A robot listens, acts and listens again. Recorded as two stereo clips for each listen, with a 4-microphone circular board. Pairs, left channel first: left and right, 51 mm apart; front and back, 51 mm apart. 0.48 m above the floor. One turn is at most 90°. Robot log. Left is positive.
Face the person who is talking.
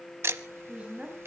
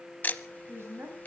note: The woman speaking: 155° right.
cmd yaw -90
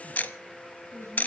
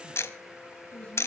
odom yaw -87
note: The woman speaking is now 65° right.
cmd yaw -65
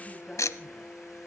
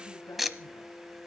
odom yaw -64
cmd idle
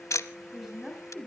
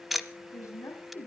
end: Found it: a woman speaking, straight ahead, 2 to 4 m away.